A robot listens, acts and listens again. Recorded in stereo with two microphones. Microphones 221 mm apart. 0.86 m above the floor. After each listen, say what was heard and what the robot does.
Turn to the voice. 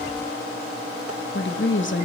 The woman speaking: about 60° left or 120° left. Turn 60° left.
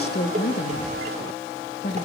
So it is at 55° left. Turn 55° left.
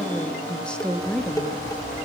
Found it: a woman speaking, straight ahead, under 1 m away.